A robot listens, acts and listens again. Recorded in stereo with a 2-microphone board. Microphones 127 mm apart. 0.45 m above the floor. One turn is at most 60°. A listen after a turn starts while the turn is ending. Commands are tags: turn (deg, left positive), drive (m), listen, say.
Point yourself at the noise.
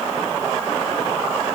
<listen/>
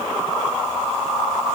<listen/>
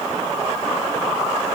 <say>I can't make out anything.</say>